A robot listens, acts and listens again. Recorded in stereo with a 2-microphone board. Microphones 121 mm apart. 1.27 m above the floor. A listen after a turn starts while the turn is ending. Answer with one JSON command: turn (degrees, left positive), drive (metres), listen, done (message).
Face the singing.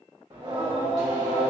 {"turn": -30}
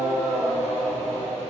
{"turn": 20}
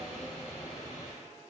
{"turn": 25}
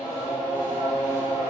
{"turn": 35}
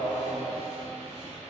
{"turn": 10}
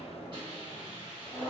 {"done": "Facing the singing, 1 to 2 m away."}